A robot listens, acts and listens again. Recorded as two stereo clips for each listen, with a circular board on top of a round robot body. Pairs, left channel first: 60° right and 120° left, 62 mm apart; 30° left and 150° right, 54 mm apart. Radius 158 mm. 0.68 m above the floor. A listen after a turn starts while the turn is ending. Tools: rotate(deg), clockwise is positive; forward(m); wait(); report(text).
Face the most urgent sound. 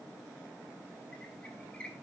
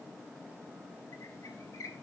wait()
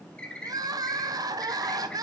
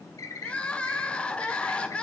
rotate(-100)
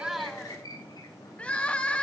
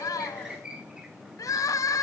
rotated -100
rotate(-15)
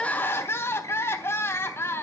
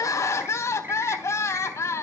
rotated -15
report("Facing the crying.")